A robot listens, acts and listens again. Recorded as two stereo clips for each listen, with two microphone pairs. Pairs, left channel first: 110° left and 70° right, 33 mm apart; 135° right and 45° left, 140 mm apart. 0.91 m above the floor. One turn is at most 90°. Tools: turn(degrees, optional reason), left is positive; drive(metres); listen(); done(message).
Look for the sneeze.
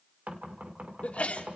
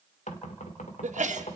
turn(degrees=70, reason="The sneeze: 70° left.")
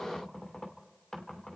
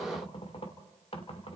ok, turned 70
done("I heard a sneeze from this way, but can't make it out now.")